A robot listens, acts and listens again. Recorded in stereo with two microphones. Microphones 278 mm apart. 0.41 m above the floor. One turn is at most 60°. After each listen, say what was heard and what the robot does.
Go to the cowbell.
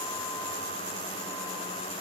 Keep listening.
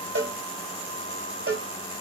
The cowbell: about 50° right or 130° right. Turn 50° right.
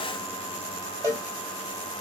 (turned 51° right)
So it is at 10° right. Turn 10° right.
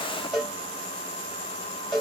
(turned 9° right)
Drive 1.0 m forward.
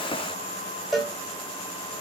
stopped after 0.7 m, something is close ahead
Arrived at the cowbell, straight ahead.